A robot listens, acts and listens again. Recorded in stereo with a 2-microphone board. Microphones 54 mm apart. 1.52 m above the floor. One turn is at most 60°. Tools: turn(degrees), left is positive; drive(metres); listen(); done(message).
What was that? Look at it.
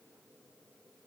listen()
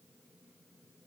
listen()
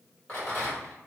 turn(degrees=30)
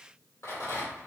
turn(degrees=60)
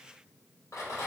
turn(degrees=60)
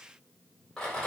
turn(degrees=10)
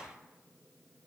listen()
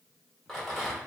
done("Facing the rattle, 1 to 2 m away.")